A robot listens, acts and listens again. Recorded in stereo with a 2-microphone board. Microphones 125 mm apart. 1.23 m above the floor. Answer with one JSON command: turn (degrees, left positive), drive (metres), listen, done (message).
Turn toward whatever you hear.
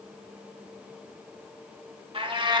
{"turn": -40}
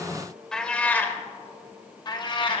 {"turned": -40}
{"turn": 40}
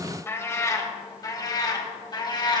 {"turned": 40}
{"turn": 35}
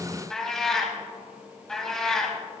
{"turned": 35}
{"done": "Found it: a cat meowing, straight ahead."}